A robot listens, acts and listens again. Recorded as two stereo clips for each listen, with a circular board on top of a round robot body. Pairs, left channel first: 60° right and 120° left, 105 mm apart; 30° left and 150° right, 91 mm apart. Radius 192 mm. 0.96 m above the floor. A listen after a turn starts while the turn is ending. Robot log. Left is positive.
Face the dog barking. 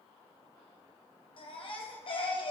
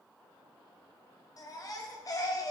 cmd idle
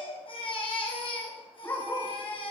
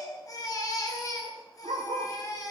note: The dog barking: 125° right.
cmd yaw -125
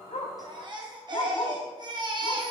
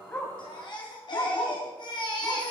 note: The dog barking is now 10° right.
cmd yaw -10
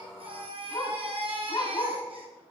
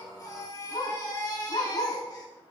end: Found it: a dog barking, straight ahead, 2 to 4 m away.